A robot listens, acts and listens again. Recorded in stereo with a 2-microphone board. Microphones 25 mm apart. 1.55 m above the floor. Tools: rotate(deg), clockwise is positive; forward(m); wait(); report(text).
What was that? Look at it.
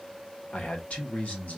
rotate(-70)
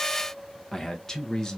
rotate(-25)
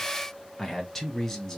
rotate(-20)
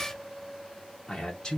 rotate(-25)
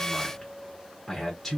report("Found it: a man speaking, straight ahead.")